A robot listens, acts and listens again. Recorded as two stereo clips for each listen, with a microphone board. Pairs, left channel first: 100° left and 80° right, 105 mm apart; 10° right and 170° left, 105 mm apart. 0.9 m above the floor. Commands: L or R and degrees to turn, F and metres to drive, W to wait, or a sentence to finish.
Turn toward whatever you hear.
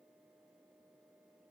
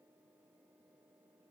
W
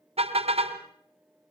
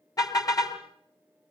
R65
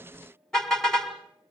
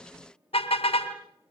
L15
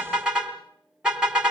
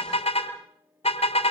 Found it: a car horn, straight ahead.